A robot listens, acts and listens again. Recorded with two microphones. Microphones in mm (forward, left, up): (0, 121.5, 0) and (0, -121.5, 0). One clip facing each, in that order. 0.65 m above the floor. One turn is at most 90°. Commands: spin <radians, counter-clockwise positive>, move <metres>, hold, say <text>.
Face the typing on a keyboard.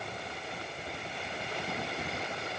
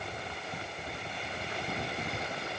hold
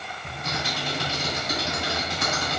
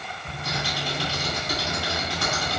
spin 0.35
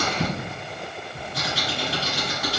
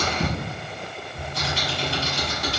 say Found it: typing on a keyboard, straight ahead.